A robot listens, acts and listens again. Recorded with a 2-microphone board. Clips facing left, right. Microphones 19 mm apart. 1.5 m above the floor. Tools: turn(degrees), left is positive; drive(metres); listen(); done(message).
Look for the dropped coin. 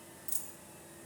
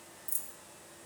turn(degrees=30)
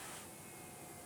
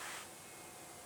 listen()
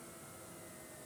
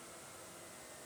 done("I heard a dropped coin, but can't make it out now. It was about straight ahead or 120° left.")